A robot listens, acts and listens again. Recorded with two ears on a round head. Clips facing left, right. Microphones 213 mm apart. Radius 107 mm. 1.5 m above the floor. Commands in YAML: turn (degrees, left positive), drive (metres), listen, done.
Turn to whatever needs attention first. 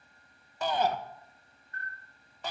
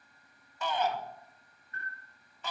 turn: 35
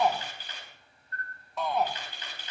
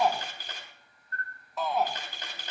done: "Facing the shout, 1 to 2 m away."